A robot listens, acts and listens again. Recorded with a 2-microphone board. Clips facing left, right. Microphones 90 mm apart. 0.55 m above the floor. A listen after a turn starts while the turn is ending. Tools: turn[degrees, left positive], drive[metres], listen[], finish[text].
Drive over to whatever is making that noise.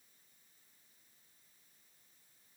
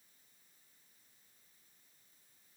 Action: listen[]
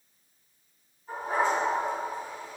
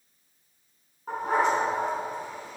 Thought: The dog barking: about 70° right or 110° right.
Action: turn[-70]
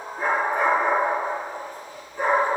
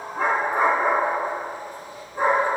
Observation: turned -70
Thought: So it is at 40° right.
Action: turn[-40]
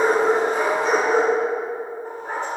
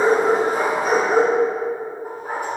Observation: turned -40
Thought: The dog barking is now 10° right.
Action: turn[-10]
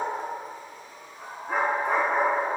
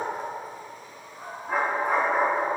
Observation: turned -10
Action: drive[1.0]
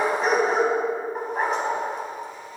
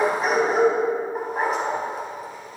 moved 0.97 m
Action: drive[1.0]
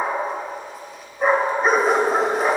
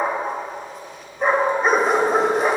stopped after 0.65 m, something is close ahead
Action: finish[I am next to the dog barking.]